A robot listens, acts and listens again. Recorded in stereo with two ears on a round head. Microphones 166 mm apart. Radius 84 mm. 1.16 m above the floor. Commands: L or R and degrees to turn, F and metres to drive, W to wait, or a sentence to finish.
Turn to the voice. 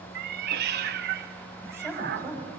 R20
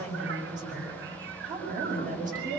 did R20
R130
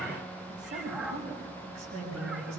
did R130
R35
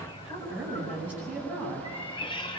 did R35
Facing the woman speaking.